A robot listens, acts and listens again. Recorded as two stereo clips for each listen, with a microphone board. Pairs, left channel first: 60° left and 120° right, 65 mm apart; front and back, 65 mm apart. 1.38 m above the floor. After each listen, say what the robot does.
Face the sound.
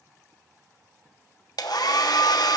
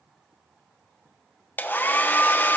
Turn 60° left.
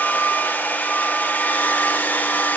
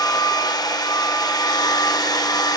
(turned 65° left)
Facing the hair dryer.